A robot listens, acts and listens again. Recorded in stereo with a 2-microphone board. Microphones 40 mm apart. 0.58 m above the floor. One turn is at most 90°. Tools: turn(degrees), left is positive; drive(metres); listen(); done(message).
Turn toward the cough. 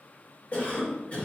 turn(degrees=35)
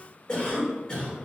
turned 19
turn(degrees=25)
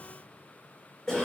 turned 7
turn(degrees=15)
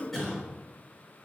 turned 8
turn(degrees=10)
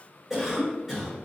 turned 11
done("Found it: a cough, straight ahead, 1 to 2 m away.")